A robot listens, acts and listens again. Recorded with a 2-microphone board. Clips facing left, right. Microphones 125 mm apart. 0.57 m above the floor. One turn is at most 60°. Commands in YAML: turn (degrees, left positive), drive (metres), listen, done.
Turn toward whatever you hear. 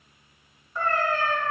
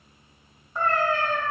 turn: -15
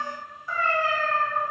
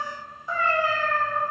turn: -15
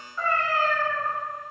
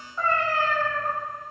turn: -15
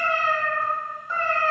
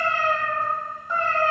turn: -30
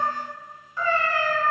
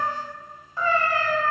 turn: -60
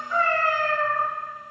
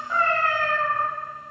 turn: -60
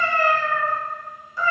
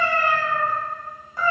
turn: -50
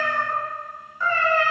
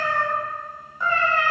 turn: -15
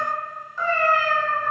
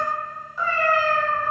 done: "Facing the cat meowing."